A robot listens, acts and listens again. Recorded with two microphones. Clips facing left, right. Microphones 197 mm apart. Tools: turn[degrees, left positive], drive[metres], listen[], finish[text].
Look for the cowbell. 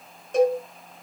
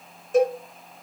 Action: turn[30]
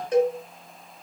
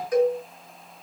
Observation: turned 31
Thought: So it is at 150° left.
Action: turn[150]
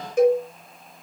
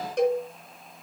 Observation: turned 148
Action: finish[Facing the cowbell.]